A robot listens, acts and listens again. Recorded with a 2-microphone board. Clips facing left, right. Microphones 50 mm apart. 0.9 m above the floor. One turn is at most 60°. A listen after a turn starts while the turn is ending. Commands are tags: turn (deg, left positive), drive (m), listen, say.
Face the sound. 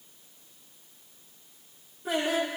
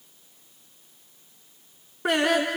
<turn deg="-60"/>
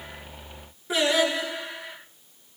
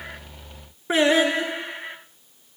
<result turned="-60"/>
<turn deg="-35"/>
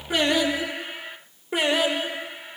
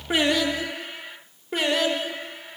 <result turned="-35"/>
<turn deg="10"/>
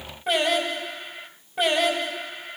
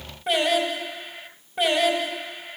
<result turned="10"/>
<say>Facing the singing, over 4 m away.</say>